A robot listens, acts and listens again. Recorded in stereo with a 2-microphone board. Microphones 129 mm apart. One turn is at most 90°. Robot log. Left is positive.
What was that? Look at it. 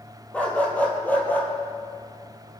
cmd yaw +30
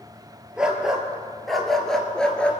cmd yaw +30
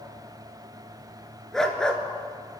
cmd yaw +30
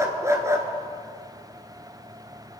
note: So it is at 25° right.
cmd yaw -25
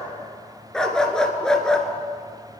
end: Found it: a dog barking, straight ahead, 1 to 2 m away.